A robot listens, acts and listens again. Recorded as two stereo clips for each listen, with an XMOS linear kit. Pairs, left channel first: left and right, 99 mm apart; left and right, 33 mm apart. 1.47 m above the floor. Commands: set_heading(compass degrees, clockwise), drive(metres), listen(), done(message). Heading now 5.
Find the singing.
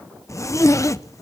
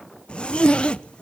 listen()
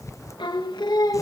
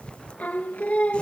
set_heading(320)
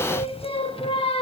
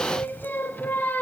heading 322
set_heading(212)
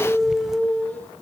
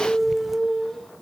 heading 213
set_heading(198)
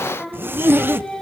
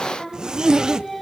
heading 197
done("Found it: singing, straight ahead, 2 to 4 m away.")